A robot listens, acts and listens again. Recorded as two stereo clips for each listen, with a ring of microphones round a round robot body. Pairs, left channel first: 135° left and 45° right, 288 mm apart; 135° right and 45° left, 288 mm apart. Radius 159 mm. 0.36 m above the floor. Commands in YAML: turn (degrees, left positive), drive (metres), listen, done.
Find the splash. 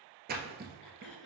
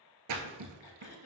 turn: 15
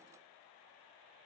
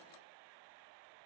done: "I heard a splash from this way, but can't make it out now."